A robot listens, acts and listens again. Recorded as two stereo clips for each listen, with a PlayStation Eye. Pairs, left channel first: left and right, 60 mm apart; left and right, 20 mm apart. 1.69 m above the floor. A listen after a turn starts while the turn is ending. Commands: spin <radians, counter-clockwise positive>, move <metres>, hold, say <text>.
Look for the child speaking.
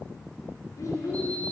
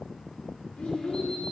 spin 1.31
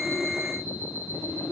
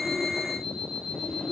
hold
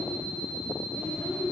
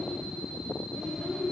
spin 0.52
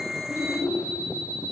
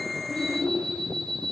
say Facing the child speaking, over 4 m away.